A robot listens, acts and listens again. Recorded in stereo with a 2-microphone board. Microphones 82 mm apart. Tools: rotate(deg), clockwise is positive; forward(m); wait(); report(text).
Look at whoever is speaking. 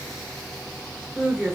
rotate(30)
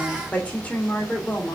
rotate(-20)
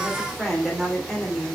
report("Facing the woman speaking.")